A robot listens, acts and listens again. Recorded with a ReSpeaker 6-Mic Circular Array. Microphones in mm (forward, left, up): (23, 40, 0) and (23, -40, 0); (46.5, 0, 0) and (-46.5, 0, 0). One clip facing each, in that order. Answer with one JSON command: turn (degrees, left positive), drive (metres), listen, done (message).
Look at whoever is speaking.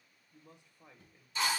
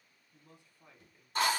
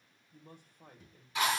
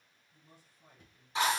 {"turn": 25}
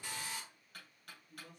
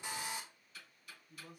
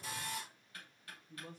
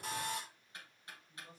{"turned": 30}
{"turn": -10}
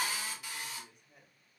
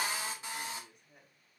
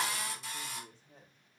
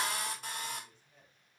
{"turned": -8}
{"done": "Facing the man speaking, 1 to 2 m away."}